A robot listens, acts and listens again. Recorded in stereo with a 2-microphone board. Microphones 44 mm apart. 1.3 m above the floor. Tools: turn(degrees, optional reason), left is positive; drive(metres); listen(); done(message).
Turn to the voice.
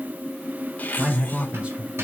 turn(degrees=-25, reason="The man speaking: about 25° right or 155° right.")
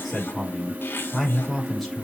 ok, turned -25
done("Facing the man speaking.")